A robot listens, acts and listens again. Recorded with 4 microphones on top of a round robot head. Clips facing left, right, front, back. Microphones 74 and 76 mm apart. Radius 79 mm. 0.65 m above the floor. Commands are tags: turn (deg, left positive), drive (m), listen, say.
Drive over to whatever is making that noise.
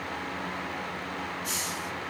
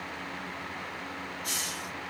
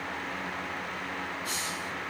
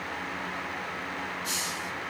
<turn deg="-110"/>
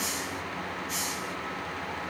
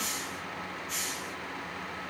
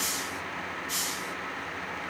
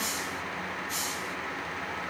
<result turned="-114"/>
<drive m="1.0"/>
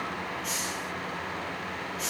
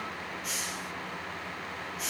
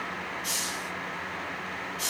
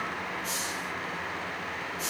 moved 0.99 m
<drive m="1.0"/>
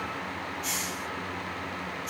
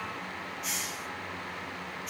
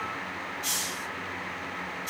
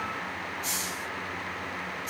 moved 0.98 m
<drive m="1.0"/>
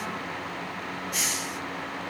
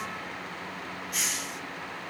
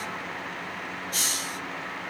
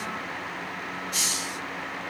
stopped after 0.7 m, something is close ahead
<say>Arrived at the hiss, straight ahead.</say>